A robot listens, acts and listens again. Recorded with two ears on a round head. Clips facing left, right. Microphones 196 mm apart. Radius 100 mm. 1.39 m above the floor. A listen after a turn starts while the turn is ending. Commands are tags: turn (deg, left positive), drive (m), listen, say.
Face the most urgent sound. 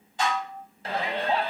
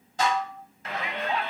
<turn deg="30"/>
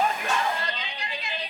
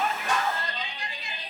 <turn deg="120"/>
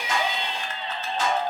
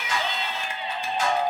<turn deg="-10"/>
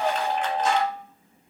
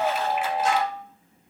<say>Found it: a shout, straight ahead, 1 to 2 m away.</say>